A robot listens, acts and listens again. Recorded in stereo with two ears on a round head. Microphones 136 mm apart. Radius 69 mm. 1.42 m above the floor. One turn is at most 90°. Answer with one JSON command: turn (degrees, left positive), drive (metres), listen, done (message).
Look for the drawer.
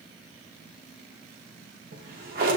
{"turn": -55}
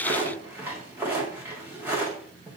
{"turn": -15}
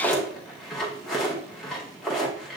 {"done": "Found it: a drawer, straight ahead."}